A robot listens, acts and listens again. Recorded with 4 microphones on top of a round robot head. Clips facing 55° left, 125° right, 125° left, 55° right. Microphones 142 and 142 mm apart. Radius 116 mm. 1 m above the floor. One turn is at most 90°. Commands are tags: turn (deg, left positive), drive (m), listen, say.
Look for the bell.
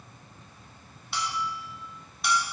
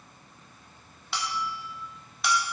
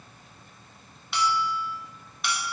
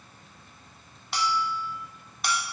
<turn deg="-90"/>
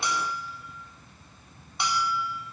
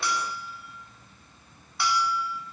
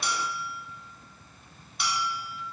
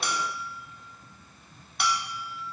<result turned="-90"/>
<turn deg="-15"/>
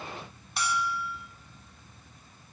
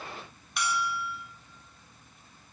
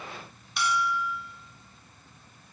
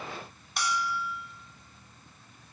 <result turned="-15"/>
<say>Facing the bell, under 1 m away.</say>